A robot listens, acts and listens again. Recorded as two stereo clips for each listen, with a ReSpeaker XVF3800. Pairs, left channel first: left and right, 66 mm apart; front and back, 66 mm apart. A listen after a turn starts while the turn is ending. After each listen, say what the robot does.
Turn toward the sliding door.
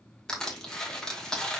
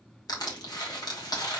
Keep listening.
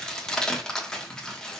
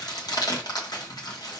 Keep listening.
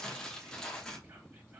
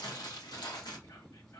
I can't make out a sliding door, only crushing.